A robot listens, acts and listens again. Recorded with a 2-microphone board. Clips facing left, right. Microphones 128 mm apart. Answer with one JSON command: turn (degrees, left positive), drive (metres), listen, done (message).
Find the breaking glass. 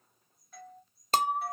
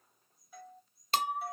{"turn": 40}
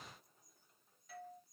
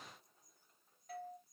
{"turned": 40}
{"listen": true}
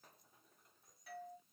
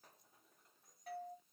{"done": "I heard breaking glass, but can't make it out now. It was about straight ahead or 100° left."}